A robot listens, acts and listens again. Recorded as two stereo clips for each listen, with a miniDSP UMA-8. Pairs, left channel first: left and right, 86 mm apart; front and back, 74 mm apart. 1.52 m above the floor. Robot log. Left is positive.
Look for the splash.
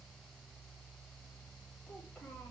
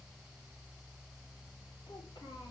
cmd idle
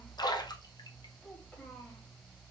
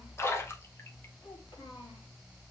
note: The splash: 55° left.
cmd yaw +55
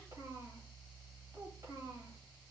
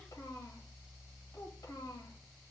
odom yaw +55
end: I heard a splash from this way, but can't make it out now.